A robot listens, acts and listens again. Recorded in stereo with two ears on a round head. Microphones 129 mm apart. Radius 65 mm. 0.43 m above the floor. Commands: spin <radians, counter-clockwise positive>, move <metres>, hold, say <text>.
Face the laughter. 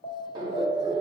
spin -0.35
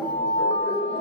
spin 0.26
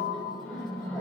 spin 0.17
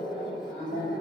spin 0.17
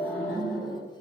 spin 0.26
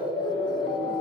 say Found it: laughter, straight ahead.